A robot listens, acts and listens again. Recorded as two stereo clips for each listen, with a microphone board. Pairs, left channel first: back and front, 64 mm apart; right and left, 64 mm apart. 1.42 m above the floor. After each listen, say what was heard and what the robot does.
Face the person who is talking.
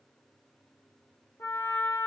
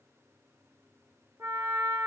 Keep listening.
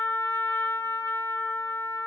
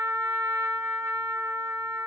Keep listening.
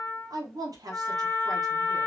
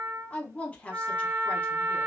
The woman speaking: 20° right. Turn 20° right.
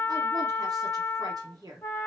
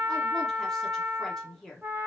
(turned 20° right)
Found it: a woman speaking, straight ahead, under 1 m away.